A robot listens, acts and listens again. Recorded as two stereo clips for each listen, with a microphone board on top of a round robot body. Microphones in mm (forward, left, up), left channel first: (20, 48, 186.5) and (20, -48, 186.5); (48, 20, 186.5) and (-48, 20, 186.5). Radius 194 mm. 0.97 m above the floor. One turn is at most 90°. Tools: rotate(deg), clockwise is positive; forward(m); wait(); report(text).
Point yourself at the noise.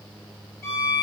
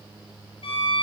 rotate(-30)
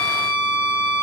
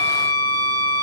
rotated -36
report("Found it: a violin, straight ahead.")